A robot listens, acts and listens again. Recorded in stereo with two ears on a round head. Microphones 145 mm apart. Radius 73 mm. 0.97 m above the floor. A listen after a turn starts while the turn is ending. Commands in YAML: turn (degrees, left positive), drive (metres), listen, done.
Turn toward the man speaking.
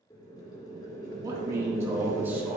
turn: -30
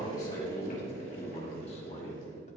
turn: 45
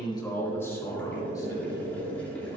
turn: 20
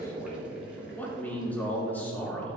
turn: 10
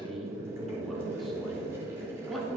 done: "Facing the man speaking, 2 to 4 m away."